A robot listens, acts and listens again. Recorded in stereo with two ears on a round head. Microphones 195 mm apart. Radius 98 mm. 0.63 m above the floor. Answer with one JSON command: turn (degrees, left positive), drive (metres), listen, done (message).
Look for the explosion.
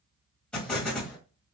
{"turn": 30}
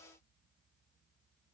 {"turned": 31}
{"listen": true}
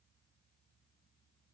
{"done": "I heard an explosion, but can't make it out now. It was about 25° right or 145° left."}